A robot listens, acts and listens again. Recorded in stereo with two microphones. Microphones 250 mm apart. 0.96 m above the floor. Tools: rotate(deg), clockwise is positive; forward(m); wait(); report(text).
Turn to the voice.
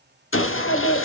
rotate(-55)
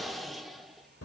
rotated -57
rotate(-65)
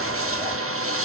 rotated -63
wait()
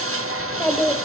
report("Found it: a child speaking, straight ahead.")